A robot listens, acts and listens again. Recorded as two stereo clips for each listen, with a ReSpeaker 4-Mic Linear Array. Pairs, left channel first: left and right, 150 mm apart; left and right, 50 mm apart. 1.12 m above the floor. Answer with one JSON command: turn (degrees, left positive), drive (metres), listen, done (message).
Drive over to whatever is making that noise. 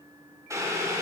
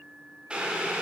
{"turn": -20}
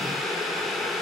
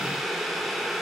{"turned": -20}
{"drive": 1.0}
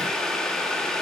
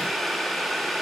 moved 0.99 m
{"drive": 1.0}
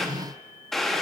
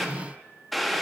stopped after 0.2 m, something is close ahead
{"done": "I am next to the boiling."}